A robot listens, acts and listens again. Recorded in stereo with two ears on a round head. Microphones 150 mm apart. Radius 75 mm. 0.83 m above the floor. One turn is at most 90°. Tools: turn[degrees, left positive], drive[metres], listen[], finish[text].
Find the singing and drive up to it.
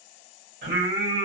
Thought: The singing: about 60° right or 120° right.
Action: turn[-60]
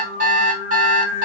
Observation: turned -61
Action: drive[1.0]
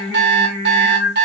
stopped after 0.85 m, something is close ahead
Thought: The singing is now 10° right.
Action: turn[-10]
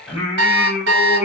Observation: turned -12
Action: finish[Arrived at the singing, straight ahead.]